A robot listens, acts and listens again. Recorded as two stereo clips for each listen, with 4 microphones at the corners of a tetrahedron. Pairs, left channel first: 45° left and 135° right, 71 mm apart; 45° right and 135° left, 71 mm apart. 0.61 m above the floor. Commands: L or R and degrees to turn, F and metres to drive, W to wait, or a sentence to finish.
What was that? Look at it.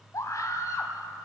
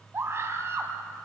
L80
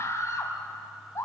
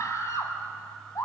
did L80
Facing the scream.